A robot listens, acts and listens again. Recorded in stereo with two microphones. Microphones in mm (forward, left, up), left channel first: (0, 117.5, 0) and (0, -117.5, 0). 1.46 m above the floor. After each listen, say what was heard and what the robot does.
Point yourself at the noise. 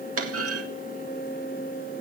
Turn 90° right.
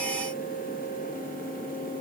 Facing where the clunk came from. I can't hear it now.